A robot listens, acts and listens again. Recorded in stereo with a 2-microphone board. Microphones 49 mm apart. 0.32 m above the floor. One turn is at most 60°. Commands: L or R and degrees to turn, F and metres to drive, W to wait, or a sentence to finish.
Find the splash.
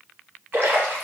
R60
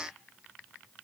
W
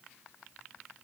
I heard a splash, but can't make it out now. It was about straight ahead or 60° right.